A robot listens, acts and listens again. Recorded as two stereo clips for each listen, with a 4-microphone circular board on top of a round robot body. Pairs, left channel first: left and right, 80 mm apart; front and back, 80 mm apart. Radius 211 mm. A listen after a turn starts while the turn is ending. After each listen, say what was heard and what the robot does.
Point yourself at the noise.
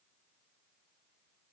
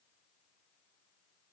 Keep listening.
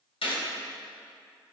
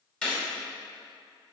The gunshot: 80° left. Turn 80° left.
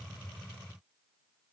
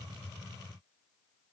Facing where the gunshot came from. I can't hear it now.